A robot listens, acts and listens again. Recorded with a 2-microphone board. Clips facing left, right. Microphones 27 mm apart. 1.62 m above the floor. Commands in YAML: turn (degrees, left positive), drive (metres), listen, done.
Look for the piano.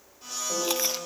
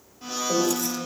turn: -15
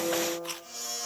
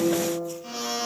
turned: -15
done: "Facing the piano, over 4 m away."